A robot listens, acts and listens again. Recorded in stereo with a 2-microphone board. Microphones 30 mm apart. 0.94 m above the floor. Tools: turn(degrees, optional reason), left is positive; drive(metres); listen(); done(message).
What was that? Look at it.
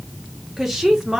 turn(degrees=-15, reason="The woman speaking: about 15° right or 165° right.")
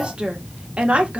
turn(degrees=-135, reason="So it is at 135° right.")
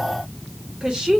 turn(degrees=-20, reason="The woman speaking is now 20° right.")
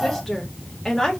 turn(degrees=10, reason="The woman speaking is now 10° left.")
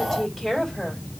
done("Found it: a woman speaking, straight ahead, 2 to 4 m away.")